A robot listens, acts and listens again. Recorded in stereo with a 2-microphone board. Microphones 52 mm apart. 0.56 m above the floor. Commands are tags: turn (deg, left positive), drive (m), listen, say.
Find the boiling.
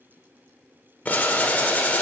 <turn deg="30"/>
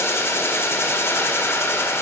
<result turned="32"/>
<turn deg="115"/>
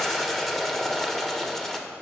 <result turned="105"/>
<say>Facing the boiling, 1 to 2 m away.</say>